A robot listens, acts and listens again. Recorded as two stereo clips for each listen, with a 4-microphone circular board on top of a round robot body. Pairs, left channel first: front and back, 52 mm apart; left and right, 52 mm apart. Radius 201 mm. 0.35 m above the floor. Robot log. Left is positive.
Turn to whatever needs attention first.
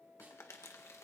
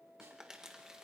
cmd idle
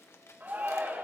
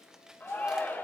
note: The shout: 130° left.
cmd yaw +130
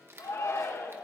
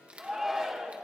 note: The shout is now 10° right.
cmd yaw -10
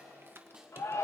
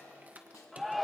end: Found it: a shout, straight ahead, 1 to 2 m away.